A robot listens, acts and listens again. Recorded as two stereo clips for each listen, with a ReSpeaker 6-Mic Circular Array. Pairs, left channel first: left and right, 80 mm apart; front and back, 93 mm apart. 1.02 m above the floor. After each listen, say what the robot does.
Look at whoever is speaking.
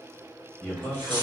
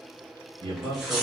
Turn 175° left.
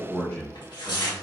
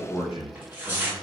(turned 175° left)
Turn 15° left.
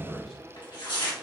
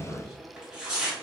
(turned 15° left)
Facing the man speaking, 1 to 2 m away.